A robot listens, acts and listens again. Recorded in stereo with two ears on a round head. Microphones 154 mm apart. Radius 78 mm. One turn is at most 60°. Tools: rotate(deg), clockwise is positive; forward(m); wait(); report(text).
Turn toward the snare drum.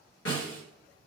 rotate(-60)
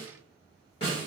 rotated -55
rotate(-35)
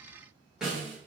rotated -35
report("Facing the snare drum.")